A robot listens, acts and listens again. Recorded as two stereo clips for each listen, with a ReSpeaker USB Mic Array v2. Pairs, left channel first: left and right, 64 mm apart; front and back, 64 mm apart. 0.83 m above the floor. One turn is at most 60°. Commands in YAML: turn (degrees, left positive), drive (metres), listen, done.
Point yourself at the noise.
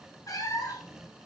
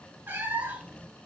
turn: 60
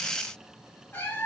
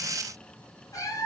turn: 30
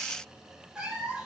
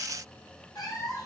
turn: -15
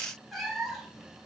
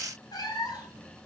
done: "Facing the cat meowing, 2 to 4 m away."